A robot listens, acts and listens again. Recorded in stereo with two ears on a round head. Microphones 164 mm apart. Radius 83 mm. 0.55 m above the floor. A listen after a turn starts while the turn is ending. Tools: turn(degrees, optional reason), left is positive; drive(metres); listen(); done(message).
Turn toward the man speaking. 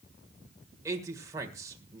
turn(degrees=-15, reason="The man speaking: about 15° right or 165° right.")
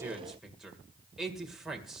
done("Facing the man speaking, 1 to 2 m away.")